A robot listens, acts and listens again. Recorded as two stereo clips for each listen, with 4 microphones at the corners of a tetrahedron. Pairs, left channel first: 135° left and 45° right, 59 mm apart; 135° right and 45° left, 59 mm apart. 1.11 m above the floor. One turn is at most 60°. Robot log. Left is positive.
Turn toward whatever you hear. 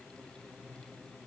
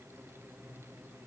cmd idle
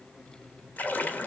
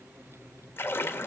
note: The splash: 170° right.
cmd yaw -60
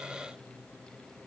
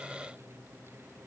note: Nothing new. It was at 110° right.
cmd yaw -60
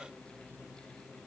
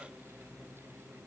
note: Nothing new. It was at 50° right.
cmd yaw -50
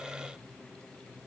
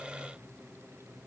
end: Facing where the splash came from. I can't hear it now.